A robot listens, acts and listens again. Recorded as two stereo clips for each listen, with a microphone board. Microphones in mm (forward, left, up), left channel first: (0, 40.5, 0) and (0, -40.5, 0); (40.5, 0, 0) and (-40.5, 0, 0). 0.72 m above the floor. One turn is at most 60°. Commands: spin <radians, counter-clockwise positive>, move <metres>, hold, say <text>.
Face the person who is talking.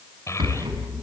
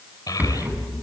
spin 0.70
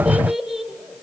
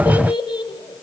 say Facing the child speaking.